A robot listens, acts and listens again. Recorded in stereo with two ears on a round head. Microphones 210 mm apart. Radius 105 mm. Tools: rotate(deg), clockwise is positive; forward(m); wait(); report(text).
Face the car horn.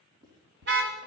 rotate(50)
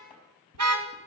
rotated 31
rotate(100)
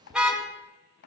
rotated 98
report("Facing the car horn.")